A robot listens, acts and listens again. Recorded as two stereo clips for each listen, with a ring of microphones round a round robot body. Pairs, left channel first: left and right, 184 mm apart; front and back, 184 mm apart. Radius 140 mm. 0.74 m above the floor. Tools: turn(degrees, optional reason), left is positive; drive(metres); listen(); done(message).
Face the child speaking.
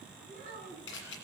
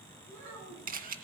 turn(degrees=-150, reason="The child speaking: 150° right.")
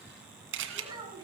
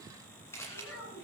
turn(degrees=-25, reason="The child speaking is now 25° right.")
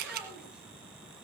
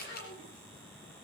listen()
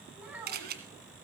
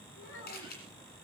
turn(degrees=-10, reason="The child speaking is now 10° right.")
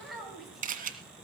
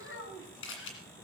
done("Found it: a child speaking, straight ahead.")